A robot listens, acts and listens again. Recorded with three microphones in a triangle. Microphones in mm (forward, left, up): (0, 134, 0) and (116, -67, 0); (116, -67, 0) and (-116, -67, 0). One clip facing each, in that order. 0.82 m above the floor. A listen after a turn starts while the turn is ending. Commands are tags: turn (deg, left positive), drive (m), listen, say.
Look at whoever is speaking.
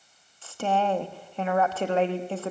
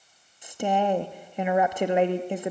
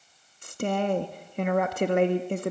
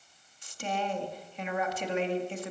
<turn deg="15"/>
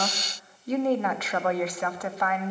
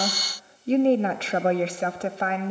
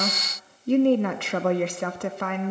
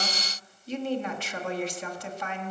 <say>Facing the woman speaking, 1 to 2 m away.</say>